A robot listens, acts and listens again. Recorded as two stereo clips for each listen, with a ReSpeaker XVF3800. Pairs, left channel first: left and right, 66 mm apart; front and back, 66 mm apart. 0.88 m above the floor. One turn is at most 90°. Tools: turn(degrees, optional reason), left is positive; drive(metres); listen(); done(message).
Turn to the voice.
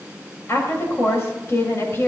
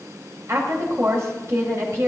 turn(degrees=90, reason="The woman speaking: 140° left.")
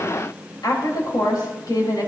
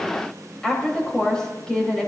turn(degrees=80, reason="The woman speaking is now 80° left.")
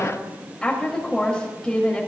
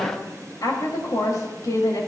turn(degrees=10, reason="The woman speaking is now 10° left.")
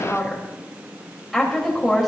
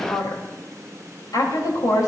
done("Facing the woman speaking, 2 to 4 m away.")